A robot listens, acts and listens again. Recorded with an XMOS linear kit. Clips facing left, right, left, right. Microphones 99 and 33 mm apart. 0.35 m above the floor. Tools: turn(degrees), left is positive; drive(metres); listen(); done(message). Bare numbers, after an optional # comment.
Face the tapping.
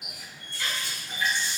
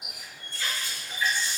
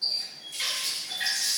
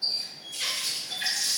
listen()
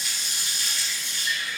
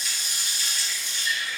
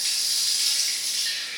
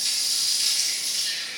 listen()
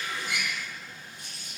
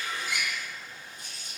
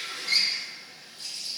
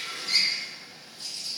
done("I can't make out tapping, only a running tap.")